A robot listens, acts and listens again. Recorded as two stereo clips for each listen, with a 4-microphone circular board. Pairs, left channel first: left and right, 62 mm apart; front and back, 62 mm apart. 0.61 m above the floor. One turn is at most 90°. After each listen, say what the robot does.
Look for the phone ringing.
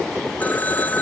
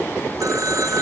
Turn 90° left.
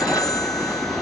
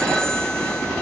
Turn 80° left.
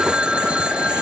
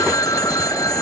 Turn 15° right.
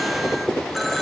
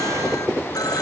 Found it: a phone ringing, straight ahead.